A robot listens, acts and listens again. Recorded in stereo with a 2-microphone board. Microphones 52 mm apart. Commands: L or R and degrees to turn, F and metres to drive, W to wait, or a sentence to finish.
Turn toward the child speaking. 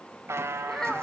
L30
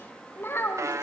L125
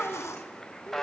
L25
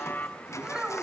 R15
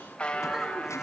W
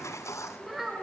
R10
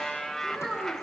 Facing the child speaking, over 4 m away.